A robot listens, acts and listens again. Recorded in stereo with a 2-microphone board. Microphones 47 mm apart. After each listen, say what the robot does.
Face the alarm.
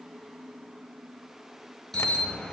Turn 30° left.
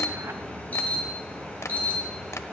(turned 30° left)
Turn 150° left.
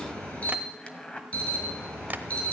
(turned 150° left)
Turn 30° left.
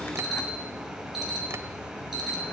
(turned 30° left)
Facing the alarm, over 4 m away.